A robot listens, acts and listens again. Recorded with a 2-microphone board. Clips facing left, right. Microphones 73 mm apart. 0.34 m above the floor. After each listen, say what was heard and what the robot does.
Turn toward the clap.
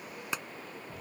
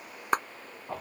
The clap: about 45° right or 135° right. Turn 45° right.
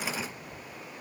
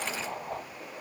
Keep listening.
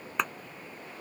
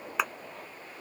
Facing the clap.